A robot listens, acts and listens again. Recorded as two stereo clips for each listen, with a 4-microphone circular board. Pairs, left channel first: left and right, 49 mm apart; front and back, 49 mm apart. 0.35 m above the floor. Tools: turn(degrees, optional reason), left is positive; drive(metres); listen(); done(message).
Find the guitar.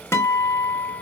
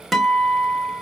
turn(degrees=90, reason="The guitar: 90° left.")
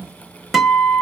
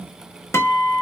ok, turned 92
done("Found it: a guitar, straight ahead.")